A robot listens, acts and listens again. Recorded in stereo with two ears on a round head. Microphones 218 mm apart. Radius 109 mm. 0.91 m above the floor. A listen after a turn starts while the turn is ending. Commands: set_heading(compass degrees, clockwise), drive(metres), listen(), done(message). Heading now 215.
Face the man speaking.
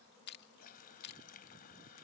listen()
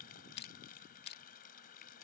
listen()
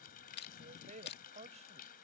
set_heading(245)
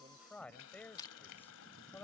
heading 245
set_heading(235)
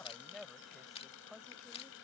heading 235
done("Found it: a man speaking, straight ahead.")